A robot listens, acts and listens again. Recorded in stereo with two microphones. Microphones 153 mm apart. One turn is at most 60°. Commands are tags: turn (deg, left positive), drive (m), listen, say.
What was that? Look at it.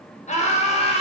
<turn deg="40"/>
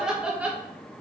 <turn deg="-10"/>
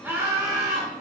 <turn deg="-25"/>
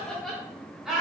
<say>Facing the laughter.</say>